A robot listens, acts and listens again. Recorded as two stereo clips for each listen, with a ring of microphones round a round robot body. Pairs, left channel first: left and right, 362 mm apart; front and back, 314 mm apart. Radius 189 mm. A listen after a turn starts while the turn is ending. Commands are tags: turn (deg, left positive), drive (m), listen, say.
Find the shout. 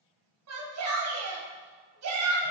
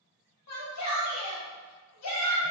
<turn deg="-45"/>
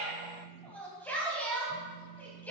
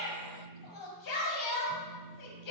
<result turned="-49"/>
<say>Facing the shout.</say>